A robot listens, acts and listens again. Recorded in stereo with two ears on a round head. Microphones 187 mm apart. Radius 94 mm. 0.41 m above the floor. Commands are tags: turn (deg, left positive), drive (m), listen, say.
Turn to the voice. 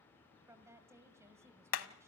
<turn deg="-30"/>
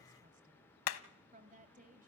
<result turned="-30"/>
<turn deg="-135"/>
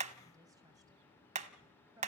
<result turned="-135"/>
<turn deg="-20"/>
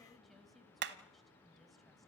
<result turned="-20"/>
<listen/>
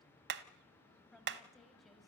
<say>Facing the woman speaking, 2 to 4 m away.</say>